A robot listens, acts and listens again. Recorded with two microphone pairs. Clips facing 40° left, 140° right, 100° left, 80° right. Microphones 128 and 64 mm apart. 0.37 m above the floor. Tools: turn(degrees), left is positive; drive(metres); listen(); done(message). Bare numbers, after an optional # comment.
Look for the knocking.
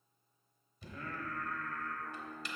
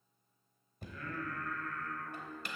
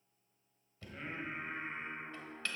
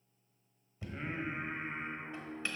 # The knocking: 150° right.
turn(-150)
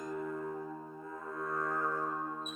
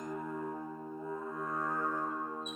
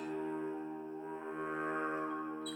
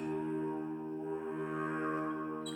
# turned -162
# Nothing new. It was at 10° left.
turn(10)
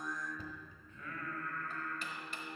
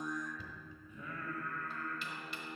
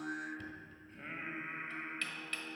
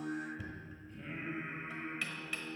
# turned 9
done("Facing the knocking.")